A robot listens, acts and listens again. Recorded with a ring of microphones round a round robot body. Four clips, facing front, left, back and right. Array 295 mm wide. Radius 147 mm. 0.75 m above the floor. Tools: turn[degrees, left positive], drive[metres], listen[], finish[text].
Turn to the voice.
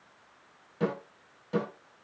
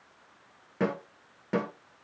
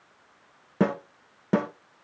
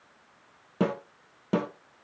Action: listen[]
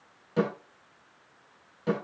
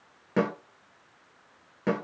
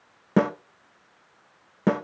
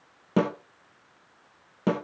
Action: listen[]
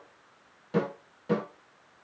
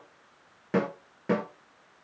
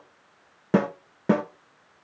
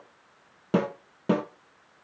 Action: finish[I can't make out anyone speaking, only a snare drum.]